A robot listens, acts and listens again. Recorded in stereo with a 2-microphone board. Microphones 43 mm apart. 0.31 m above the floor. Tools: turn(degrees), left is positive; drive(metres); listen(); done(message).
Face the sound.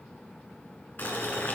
turn(degrees=50)
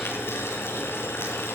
turn(degrees=80)
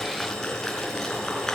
turn(degrees=10)
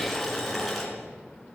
done("Facing the boiling, 2 to 4 m away.")